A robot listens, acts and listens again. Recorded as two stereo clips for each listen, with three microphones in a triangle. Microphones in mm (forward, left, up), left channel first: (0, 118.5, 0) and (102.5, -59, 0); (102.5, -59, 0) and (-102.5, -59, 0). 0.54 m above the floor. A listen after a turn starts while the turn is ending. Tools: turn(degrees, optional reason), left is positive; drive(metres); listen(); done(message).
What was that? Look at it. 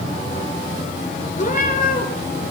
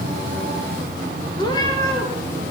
turn(degrees=75, reason="The cat meowing: 75° left.")
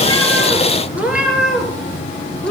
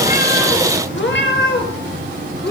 turn(degrees=35, reason="The cat meowing is now 35° left.")
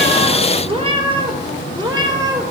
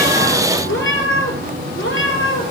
turn(degrees=15, reason="The cat meowing is now 15° left.")
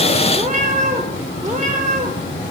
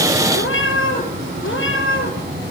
done("Found it: a cat meowing, straight ahead.")